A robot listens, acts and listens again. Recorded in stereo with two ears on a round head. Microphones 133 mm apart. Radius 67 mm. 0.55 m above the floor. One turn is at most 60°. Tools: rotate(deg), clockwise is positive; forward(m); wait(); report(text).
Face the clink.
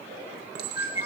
rotate(60)
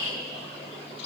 wait()
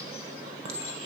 rotate(40)
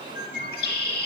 wait()
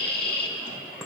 report("Facing the clink.")